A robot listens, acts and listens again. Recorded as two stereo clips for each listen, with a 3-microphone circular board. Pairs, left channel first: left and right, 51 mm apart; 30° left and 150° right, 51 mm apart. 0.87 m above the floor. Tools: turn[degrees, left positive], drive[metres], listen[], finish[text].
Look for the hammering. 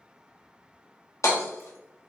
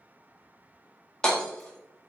Thought: The hammering: 105° left.
Action: turn[105]
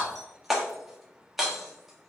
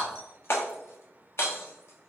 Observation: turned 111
Action: finish[Facing the hammering, 1 to 2 m away.]